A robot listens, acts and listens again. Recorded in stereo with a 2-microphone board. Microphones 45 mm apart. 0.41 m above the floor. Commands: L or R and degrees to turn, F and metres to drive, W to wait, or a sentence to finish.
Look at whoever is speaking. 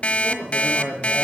R30
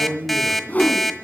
R135
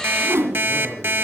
R20
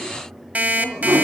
Facing the man speaking.